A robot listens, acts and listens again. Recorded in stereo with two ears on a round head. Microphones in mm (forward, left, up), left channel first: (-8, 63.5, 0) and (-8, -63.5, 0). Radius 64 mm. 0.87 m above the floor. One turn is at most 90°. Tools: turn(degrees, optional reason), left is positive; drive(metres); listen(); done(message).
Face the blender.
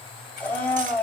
turn(degrees=30)
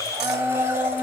turn(degrees=-20, reason="So it is at 20° right.")
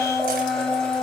done("Facing the blender, over 4 m away.")